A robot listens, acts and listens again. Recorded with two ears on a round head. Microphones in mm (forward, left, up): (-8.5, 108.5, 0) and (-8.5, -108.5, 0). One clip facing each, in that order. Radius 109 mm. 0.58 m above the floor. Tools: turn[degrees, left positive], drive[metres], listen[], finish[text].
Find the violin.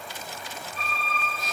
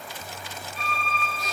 Action: turn[-30]
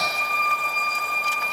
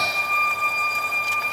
Thought: So it is at 140° right.
Action: turn[-140]
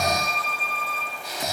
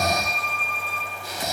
Thought: The violin is now 10° left.
Action: turn[10]
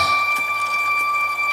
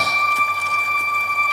Action: finish[Found it: a violin, straight ahead.]